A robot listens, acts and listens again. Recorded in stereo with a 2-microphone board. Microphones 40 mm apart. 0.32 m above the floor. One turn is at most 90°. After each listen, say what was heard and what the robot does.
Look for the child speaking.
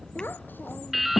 The child speaking: about 55° left or 125° left. Turn 55° left.
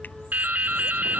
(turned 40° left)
Keep listening.
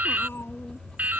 So it is at 80° left. Turn 80° left.
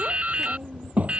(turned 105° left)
The child speaking is now 35° right. Turn 35° right.
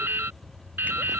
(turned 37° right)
Keep listening.
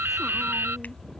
Keep listening.
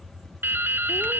I heard a child speaking from this way, but can't make it out now.